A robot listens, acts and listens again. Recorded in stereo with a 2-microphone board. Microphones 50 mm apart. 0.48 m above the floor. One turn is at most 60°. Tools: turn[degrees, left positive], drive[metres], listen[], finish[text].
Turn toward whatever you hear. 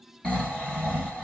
Thought: The snoring: about 20° left or 160° left.
Action: turn[20]
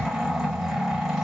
Action: finish[Facing the snoring, 1 to 2 m away.]